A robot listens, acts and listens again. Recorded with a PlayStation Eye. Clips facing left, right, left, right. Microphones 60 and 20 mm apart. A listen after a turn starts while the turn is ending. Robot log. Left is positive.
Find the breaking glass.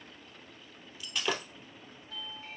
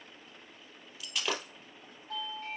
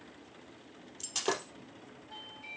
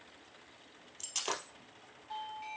cmd yaw -30
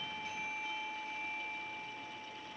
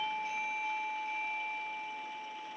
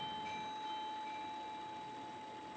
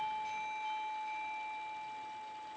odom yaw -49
cmd idle
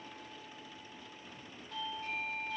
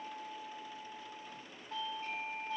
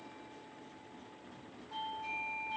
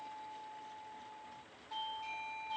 end: I heard breaking glass, but can't make it out now. It was about 45° left or 130° right.